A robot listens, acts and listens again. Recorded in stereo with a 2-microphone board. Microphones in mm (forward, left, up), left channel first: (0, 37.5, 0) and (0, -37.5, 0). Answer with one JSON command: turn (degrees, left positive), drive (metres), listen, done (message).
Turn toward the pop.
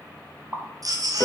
{"turn": -25}
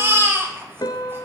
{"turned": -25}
{"listen": true}
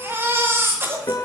{"done": "I heard a pop, but can't make it out now. It was about straight ahead or 130° right."}